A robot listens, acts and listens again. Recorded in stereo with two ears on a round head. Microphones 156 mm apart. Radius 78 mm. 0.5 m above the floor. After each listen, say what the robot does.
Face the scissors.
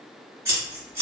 Turn 20° right.
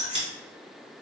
Turn 140° right.
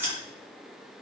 Turn 10° right.
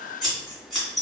Facing the scissors.